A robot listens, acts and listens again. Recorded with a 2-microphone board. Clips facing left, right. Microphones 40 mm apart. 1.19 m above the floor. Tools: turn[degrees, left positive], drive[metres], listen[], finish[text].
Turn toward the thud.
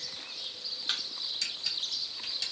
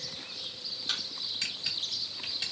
Thought: The thud: about 20° left or 160° left.
Action: turn[20]
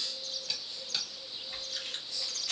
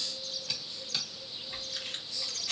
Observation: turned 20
Action: listen[]
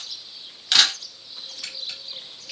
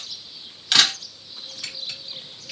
Action: finish[I heard a thud, but can't make it out now. It was about straight ahead or 140° left.]